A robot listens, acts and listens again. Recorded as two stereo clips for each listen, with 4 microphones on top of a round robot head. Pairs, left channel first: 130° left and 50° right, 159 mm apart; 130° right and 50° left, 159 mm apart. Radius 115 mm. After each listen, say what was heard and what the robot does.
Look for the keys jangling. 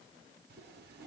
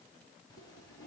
Keep listening.
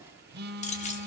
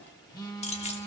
The keys jangling: 175° left. Turn 175° left.
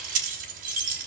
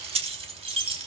The keys jangling is now 10° right. Turn 10° right.
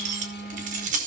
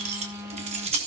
Facing the keys jangling.